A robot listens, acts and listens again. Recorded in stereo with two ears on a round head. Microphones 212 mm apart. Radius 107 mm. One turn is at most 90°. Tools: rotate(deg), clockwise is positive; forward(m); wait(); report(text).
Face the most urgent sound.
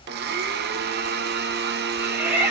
rotate(30)
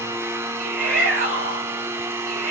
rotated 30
rotate(90)
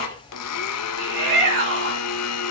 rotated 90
rotate(50)
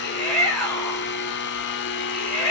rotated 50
report("Found it: a shout, straight ahead, over 4 m away.")